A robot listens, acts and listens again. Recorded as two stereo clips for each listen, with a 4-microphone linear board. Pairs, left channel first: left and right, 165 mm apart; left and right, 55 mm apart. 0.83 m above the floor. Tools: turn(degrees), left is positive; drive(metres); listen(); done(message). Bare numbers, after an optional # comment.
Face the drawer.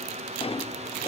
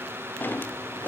# The drawer: about 35° left or 145° left.
turn(35)
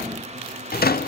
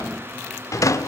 # So it is at 110° left.
turn(110)
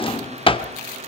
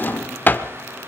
# The drawer is now 35° left.
turn(35)
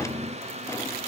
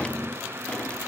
# The drawer is now 20° left.
turn(20)
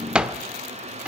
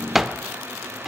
done("Found it: a drawer, straight ahead, under 1 m away.")